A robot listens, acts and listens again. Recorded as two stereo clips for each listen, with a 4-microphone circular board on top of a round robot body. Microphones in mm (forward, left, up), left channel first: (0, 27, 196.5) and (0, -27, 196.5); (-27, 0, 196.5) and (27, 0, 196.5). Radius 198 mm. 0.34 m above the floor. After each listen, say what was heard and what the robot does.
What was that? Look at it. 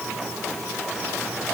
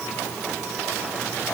Keep listening.
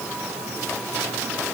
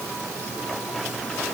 Keep listening.
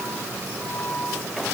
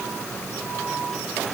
I can't make out anything.